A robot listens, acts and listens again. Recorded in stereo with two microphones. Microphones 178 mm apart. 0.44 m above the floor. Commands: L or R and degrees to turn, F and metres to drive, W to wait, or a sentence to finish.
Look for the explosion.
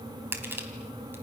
W
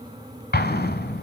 L65
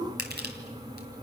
W
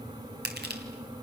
I heard an explosion, but can't make it out now. It was about straight ahead or 50° left.